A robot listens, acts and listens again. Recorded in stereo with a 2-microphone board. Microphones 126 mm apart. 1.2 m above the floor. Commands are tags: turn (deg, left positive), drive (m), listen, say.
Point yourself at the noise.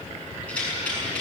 <turn deg="30"/>
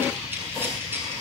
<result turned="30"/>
<turn deg="-15"/>
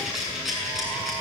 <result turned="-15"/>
<say>Facing the rattle.</say>